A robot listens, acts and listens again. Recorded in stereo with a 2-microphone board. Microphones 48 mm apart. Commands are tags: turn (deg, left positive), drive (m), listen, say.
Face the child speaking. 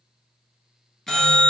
<listen/>
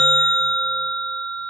<listen/>
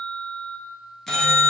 <say>I can't make out a child speaking, only a bell.</say>